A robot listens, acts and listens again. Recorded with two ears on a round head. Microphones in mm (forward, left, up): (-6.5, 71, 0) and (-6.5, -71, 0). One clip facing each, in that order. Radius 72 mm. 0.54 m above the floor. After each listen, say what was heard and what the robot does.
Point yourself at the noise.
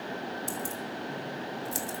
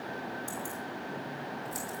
The keys jangling: about 30° left or 150° left. Turn 30° left.
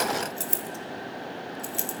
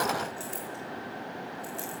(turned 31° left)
So it is at 100° left. Turn 100° left.
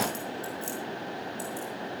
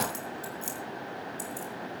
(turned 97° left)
The keys jangling is now 15° right. Turn 15° right.
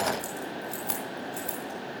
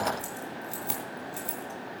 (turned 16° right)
Found it: keys jangling, straight ahead.